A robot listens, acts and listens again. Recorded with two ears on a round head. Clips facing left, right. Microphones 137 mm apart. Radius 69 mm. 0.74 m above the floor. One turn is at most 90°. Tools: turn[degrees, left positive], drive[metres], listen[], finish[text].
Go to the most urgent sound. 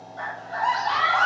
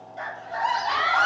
Thought: The scream: about 20° right or 160° right.
Action: turn[-20]
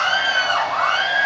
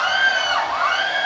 Action: drive[1.0]
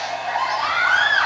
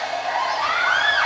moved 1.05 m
Action: drive[1.0]
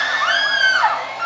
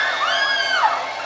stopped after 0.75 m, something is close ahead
Action: finish[I am next to the scream.]